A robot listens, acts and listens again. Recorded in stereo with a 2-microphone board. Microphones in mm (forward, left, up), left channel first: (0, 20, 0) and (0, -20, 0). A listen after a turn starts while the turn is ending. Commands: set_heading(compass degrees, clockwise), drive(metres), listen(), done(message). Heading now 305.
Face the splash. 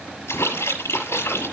set_heading(215)
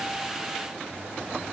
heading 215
done("I heard a splash from this way, but can't make it out now.")